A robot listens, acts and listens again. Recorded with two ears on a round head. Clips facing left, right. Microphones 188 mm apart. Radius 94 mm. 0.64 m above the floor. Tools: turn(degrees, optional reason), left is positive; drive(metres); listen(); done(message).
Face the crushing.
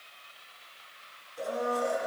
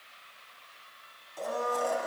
listen()
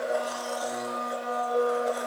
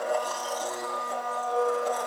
listen()
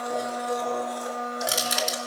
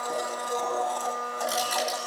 turn(degrees=30, reason="The crushing: about 30° left or 150° left.")
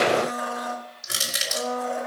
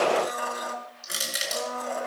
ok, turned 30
done("Facing the crushing.")